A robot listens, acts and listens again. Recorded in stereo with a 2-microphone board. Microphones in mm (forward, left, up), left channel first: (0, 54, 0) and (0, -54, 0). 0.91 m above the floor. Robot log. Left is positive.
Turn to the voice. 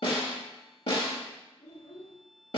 cmd yaw +90
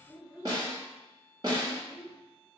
end: Found it: a child speaking, straight ahead.